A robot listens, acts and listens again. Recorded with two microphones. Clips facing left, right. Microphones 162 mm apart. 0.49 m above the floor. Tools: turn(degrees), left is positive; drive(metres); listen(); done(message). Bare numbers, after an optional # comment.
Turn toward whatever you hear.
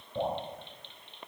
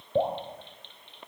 # The dripping: about 75° right or 105° right.
turn(-75)
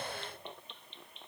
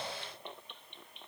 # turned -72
listen()
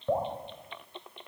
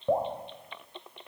# So it is at 20° right.
turn(-20)
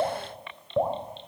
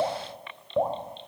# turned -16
done("Found it: dripping, straight ahead.")